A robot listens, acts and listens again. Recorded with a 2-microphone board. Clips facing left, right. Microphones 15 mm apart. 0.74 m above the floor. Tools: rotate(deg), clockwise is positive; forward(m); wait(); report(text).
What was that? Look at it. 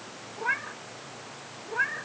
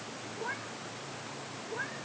rotate(-60)
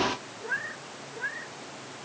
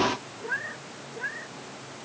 report("Facing the cat meowing.")